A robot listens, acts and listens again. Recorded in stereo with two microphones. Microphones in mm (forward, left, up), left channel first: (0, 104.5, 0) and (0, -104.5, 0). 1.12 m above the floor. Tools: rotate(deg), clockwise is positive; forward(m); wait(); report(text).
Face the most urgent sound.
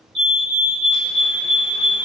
rotate(-30)
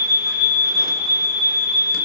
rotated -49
rotate(-130)
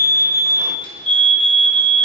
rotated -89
rotate(-35)
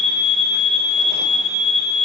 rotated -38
report("Facing the fire alarm.")